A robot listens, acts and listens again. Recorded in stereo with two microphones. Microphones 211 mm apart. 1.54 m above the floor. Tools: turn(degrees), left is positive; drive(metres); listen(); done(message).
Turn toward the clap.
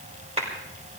turn(degrees=-30)
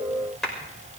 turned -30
done("Facing the clap, over 4 m away.")